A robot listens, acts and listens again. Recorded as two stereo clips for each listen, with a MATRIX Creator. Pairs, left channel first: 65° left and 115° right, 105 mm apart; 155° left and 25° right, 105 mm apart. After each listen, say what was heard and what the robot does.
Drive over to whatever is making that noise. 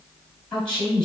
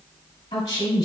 The woman speaking: 145° left. Turn 145° left.
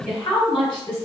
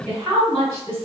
The woman speaking is now 30° left. Turn 30° left.
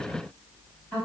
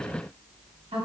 The woman speaking is now 15° right. Turn 15° right.
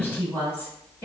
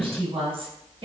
Drive 1.0 m forward.
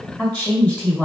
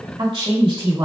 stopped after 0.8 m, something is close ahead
The woman speaking is now 10° right. Turn 10° right.
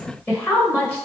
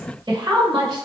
Arrived at the woman speaking, straight ahead.